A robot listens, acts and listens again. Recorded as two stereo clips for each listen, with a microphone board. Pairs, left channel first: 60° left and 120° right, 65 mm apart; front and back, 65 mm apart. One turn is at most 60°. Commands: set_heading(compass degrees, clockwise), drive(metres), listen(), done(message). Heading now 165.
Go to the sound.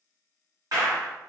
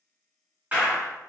set_heading(225)
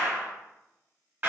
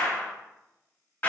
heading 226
set_heading(281)
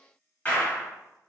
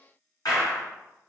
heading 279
drive(1.0)
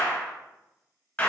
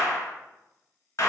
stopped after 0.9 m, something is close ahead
done("I am next to the clap.")